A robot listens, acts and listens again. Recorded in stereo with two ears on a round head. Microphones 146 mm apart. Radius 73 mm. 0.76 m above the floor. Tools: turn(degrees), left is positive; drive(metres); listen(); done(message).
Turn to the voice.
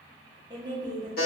turn(degrees=-25)
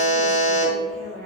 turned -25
done("Found it: a woman speaking, straight ahead.")